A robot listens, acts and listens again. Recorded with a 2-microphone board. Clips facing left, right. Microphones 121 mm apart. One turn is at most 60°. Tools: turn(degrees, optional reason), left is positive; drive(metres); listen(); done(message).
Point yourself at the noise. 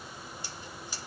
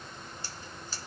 turn(degrees=30)
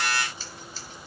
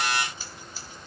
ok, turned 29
turn(degrees=-15, reason="So it is at 15° right.")
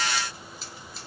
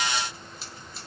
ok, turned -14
done("Found it: scissors, straight ahead, 1 to 2 m away.")